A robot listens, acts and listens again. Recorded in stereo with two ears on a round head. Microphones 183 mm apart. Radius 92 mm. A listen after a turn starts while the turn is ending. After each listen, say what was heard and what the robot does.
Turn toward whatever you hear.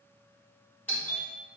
Turn 30° left.
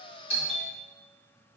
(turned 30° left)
So it is at 140° left. Turn 140° left.
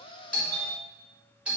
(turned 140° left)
Facing the doorbell, over 4 m away.